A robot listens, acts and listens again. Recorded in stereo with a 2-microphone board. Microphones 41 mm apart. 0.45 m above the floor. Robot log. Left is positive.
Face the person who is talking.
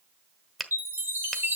cmd idle
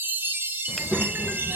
note: The child speaking: about 65° left or 115° left.
cmd yaw +65
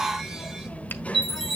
note: So it is at 40° left.
cmd yaw +40
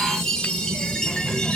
note: The child speaking is now 10° left.
cmd yaw +10
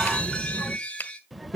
end: Found it: a child speaking, straight ahead, under 1 m away.